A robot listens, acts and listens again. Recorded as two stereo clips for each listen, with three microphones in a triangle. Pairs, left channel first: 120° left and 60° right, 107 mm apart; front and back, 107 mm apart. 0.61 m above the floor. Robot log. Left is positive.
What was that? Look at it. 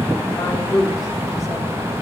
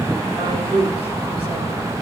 note: The woman speaking: 170° left.
cmd yaw +170
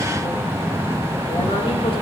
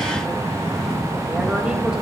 cmd idle
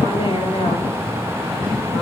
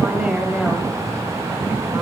note: The woman speaking is now 100° left.
cmd yaw +100
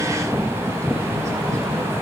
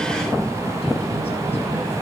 cmd idle
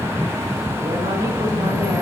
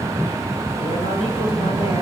cmd idle
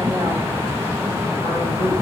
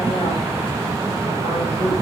end: Facing where the woman speaking came from. I can't hear it now.